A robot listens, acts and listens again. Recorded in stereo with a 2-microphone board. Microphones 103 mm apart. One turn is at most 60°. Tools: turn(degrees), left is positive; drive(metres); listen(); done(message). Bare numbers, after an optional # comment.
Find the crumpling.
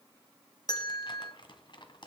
# The crumpling: about 50° left or 130° left.
turn(50)
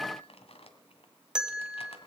# So it is at 80° left.
turn(60)
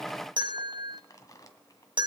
# The crumpling is now 35° left.
turn(35)
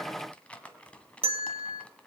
# The crumpling is now 10° left.
turn(10)
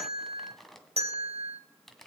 done("Found it: crumpling, straight ahead.")